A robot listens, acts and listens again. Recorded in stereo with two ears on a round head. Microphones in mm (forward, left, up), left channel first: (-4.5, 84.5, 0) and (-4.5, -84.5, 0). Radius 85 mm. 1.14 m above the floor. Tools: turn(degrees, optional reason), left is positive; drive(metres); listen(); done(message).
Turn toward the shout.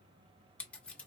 listen()
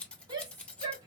turn(degrees=-25, reason="The shout: about 25° right or 155° right.")
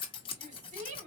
turn(degrees=-130, reason="So it is at 130° right.")
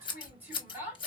turn(degrees=-10, reason="The shout is now 10° right.")
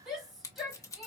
done("Found it: a shout, straight ahead, 1 to 2 m away.")